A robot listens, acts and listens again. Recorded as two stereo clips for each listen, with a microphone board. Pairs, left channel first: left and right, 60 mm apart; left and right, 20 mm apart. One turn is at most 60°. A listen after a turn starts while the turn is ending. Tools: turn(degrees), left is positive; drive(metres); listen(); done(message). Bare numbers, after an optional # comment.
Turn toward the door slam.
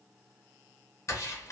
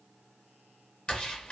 # The door slam: about 55° left or 125° left.
turn(55)
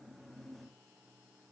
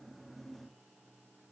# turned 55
listen()
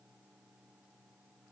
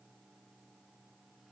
done("I heard a door slam, but can't make it out now. It was about straight ahead or 70° left.")